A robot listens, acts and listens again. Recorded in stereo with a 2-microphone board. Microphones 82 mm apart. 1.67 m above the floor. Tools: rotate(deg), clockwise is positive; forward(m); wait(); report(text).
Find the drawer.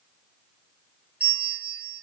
wait()
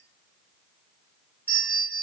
wait()
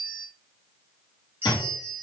rotate(-55)
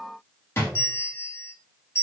rotate(-40)
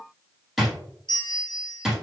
report("Facing the drawer, 1 to 2 m away.")